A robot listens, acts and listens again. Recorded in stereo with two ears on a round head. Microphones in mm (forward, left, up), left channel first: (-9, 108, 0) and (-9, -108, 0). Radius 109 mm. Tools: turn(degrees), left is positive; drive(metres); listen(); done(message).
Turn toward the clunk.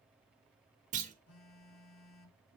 turn(degrees=-30)
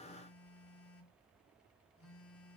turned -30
listen()
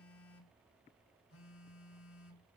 done("I heard a clunk, but can't make it out now. It was about straight ahead or 120° right.")